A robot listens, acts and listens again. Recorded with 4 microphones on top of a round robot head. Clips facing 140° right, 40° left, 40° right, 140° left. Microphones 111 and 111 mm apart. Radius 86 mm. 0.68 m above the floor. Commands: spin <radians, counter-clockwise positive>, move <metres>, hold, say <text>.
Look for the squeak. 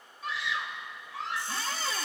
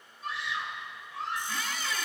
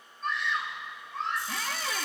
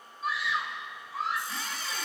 spin -1.40
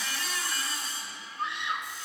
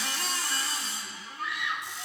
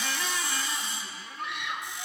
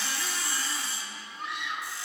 hold
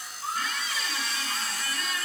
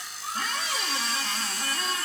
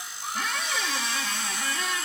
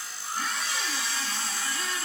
spin -0.26
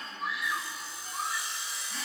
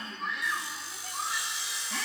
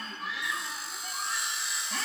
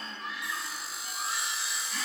say Facing the squeak.